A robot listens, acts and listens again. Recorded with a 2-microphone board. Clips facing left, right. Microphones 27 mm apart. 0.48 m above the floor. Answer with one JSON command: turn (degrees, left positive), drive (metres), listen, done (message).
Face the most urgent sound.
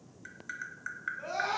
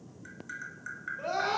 {"turn": -55}
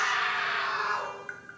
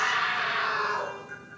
{"turn": -30}
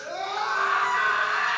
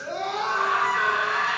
{"done": "Facing the scream, 2 to 4 m away."}